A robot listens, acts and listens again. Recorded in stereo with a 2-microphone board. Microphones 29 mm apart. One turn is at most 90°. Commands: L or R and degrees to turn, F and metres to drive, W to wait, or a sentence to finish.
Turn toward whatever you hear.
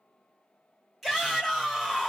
L30
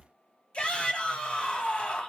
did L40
L90
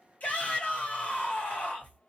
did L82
L60
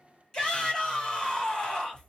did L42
L20
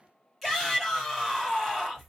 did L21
Found it: a shout, straight ahead, 2 to 4 m away.